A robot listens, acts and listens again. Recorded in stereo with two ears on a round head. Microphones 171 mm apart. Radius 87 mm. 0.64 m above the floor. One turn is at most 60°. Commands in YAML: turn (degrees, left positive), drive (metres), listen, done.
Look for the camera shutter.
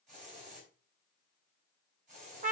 listen: true
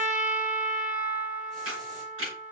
turn: -60
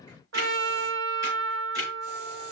turn: -30
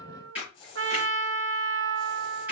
turn: -10
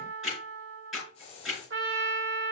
done: "Found it: a camera shutter, straight ahead."